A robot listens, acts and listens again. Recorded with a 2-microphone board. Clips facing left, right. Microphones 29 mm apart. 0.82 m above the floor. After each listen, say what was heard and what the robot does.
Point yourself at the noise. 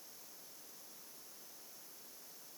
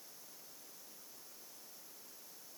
Keep listening.
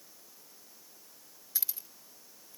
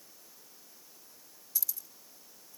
The keys jangling: about 40° left or 140° left. Turn 40° left.
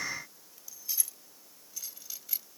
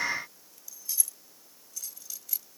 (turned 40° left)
So it is at 20° left. Turn 20° left.
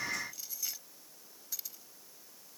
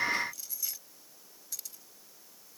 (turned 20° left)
The keys jangling is now 10° left. Turn 10° left.
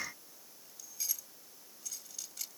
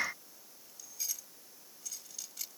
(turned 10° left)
Facing the keys jangling.